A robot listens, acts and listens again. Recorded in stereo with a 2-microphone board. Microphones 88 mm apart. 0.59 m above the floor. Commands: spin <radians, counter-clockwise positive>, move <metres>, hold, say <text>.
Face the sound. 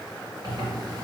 spin -0.96
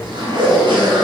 spin -1.31
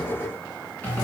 spin 0.35
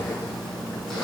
say Found it: a zipper, straight ahead, 1 to 2 m away.